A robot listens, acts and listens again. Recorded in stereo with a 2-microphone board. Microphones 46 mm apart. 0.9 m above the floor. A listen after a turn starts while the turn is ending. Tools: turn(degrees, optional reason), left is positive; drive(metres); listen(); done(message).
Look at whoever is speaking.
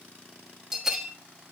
listen()
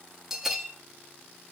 listen()
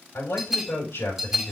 turn(degrees=90)
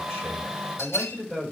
turn(degrees=10, reason="So it is at 10° left.")
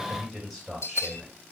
done("Facing the man speaking.")